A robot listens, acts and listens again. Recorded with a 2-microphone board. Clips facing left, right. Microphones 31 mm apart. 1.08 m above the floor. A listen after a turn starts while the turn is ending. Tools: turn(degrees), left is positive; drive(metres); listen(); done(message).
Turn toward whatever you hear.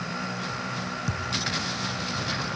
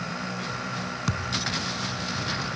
turn(degrees=-70)
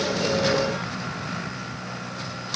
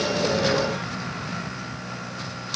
listen()
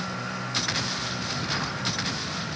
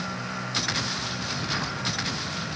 done("I heard a thud, but can't make it out now. It was about straight ahead or 40° right.")